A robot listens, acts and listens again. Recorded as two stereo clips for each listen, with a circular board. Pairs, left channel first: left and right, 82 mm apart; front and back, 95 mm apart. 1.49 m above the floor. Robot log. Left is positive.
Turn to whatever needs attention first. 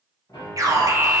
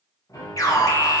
note: The alarm: 50° right.
cmd yaw -50
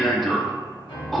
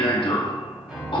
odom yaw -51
end: Found it: an alarm, straight ahead.